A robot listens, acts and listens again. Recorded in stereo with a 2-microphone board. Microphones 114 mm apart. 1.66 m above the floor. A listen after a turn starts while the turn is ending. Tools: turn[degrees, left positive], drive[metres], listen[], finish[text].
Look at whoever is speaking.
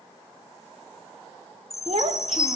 Thought: The child speaking: about 60° right or 120° right.
Action: turn[-60]
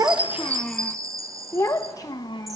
Thought: So it is at 40° left.
Action: turn[40]
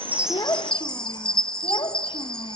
Thought: The child speaking is now 45° left.
Action: turn[45]
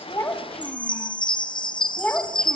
Thought: The child speaking is now 15° left.
Action: turn[15]
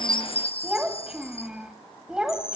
Action: finish[Facing the child speaking, 1 to 2 m away.]